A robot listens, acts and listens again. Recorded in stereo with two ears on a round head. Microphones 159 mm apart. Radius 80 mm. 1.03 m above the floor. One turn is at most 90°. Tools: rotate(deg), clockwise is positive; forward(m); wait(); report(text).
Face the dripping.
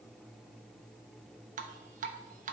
rotate(45)
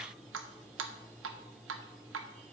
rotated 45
rotate(90)
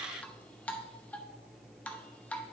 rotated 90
rotate(-10)
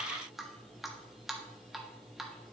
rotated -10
report("Facing the dripping, under 1 m away.")